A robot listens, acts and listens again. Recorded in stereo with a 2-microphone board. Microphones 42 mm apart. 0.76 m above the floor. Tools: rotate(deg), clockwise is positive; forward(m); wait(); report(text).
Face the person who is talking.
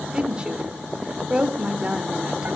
rotate(20)
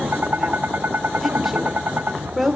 report("Found it: a woman speaking, straight ahead, 2 to 4 m away.")